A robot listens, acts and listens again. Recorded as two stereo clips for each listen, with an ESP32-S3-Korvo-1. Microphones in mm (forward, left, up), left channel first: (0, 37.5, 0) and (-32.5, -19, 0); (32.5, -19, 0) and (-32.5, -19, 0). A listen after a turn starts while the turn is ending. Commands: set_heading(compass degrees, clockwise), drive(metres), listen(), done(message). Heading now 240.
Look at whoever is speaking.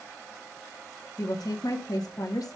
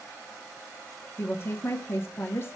set_heading(190)
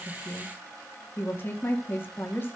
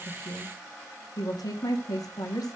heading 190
done("Facing the woman speaking.")